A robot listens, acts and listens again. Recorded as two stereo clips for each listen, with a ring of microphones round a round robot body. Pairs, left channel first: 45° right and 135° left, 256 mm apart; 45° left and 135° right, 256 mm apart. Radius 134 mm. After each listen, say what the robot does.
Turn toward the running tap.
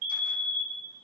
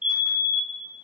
Keep listening.
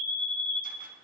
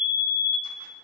Keep listening.
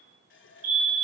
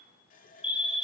Turn 10° right.
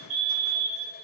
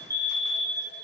Keep listening.
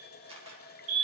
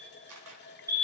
Facing the running tap, 1 to 2 m away.